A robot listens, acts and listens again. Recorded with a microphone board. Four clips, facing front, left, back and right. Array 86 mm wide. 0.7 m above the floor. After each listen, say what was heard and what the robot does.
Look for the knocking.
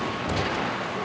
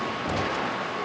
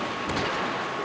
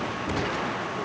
The knocking: 65° left. Turn 65° left.
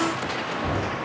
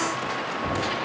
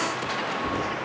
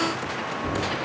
The knocking is now 20° left. Turn 20° left.
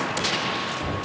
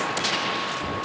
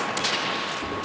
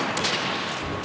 Facing the knocking, 2 to 4 m away.